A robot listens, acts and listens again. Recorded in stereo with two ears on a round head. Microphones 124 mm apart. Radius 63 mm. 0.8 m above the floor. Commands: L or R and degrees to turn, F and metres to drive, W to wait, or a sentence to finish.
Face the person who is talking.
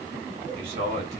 R45
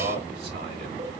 R85
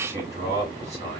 R25
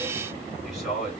Facing the man speaking.